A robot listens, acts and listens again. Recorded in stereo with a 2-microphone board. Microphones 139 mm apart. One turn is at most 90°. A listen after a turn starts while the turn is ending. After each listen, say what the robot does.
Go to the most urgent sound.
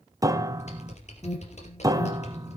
Turn 35° left.
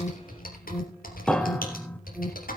Drive 1.0 m forward.
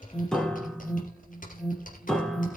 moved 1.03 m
Drive 1.0 m forward.
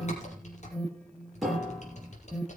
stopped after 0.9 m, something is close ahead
Turn 10° left.
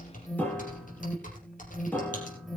Arrived at the alarm, straight ahead.